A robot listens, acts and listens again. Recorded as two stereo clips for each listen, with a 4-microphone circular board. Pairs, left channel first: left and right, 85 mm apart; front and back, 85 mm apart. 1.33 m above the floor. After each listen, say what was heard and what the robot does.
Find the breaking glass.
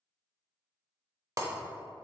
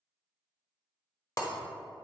The breaking glass: 45° right. Turn 45° right.
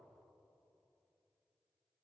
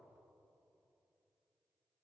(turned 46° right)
I heard breaking glass from this way, but can't make it out now.